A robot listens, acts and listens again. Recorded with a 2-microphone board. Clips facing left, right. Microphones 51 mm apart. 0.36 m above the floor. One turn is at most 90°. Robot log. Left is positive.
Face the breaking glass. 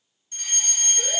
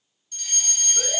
cmd idle
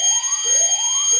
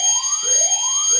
cmd idle
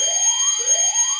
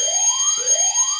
end: I can't make out breaking glass, only a fire alarm.